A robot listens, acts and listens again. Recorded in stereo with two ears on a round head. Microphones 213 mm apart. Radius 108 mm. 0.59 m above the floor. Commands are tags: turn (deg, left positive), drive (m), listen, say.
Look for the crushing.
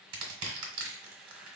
<turn deg="-55"/>
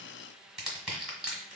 <say>Facing the crushing.</say>